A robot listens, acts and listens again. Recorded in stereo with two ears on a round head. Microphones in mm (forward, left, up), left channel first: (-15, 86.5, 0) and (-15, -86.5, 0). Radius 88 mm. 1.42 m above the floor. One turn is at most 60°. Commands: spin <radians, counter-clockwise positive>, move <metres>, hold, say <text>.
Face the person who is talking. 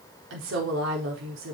spin -1.05
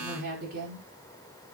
spin -0.87
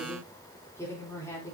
spin 0.26
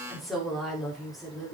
say Found it: a woman speaking, straight ahead.